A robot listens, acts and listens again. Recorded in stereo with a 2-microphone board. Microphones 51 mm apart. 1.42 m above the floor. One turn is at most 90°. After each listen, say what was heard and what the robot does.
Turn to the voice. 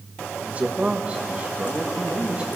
The man speaking: about 20° right or 160° right. Turn 20° right.
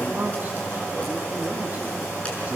The man speaking: about 35° right or 145° right. Turn 35° right.
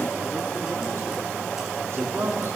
So it is at 115° right. Turn 90° right.
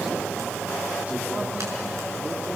Nothing new. It was at 25° right. Turn 25° right.
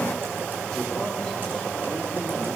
Keep listening.
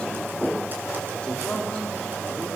The man speaking is now 15° left. Turn 15° left.
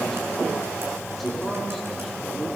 Found it: a man speaking, straight ahead.